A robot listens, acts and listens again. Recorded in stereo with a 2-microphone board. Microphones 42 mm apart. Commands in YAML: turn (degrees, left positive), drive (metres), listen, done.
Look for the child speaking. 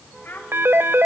turn: 55
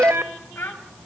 turn: 65
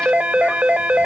listen: true
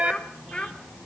turn: 25
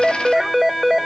listen: true
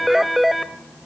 listen: true
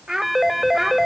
turn: -10
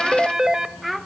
done: "Facing the child speaking, 1 to 2 m away."